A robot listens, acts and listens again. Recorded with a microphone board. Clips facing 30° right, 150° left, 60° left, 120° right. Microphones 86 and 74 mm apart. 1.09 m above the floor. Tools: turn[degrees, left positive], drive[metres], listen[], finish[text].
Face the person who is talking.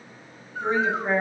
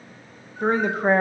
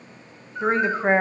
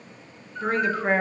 Thought: The woman speaking: 125° left.
Action: turn[125]
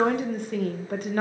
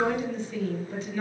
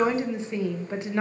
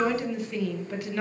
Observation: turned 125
Action: finish[Facing the woman speaking, under 1 m away.]